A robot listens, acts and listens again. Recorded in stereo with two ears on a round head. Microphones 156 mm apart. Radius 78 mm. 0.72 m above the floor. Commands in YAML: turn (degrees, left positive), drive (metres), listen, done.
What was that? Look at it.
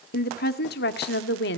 turn: 65
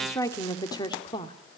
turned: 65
turn: 25
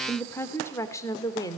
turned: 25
turn: 20
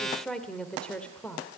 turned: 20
done: "Found it: a woman speaking, straight ahead, 2 to 4 m away."